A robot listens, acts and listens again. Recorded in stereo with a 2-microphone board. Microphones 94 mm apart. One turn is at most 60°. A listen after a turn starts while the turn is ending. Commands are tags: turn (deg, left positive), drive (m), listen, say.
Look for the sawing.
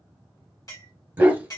<listen/>
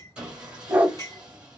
<turn deg="-30"/>
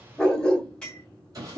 <turn deg="-60"/>
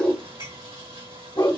<turn deg="-60"/>
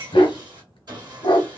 <turn deg="-50"/>
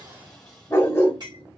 <say>Found it: sawing, straight ahead, 1 to 2 m away.</say>